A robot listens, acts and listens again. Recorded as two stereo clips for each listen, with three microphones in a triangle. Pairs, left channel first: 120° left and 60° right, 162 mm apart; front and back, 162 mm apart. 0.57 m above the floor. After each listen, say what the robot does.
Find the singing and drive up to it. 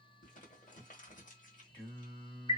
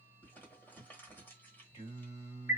Turn 45° left.
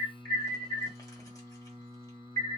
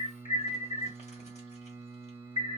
Turn 15° left.
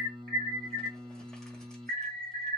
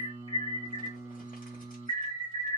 Drive 1.0 m forward.
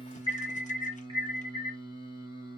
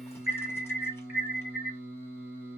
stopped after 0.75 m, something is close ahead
Turn 10° right.
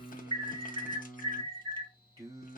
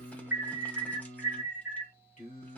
Arrived at the singing, straight ahead.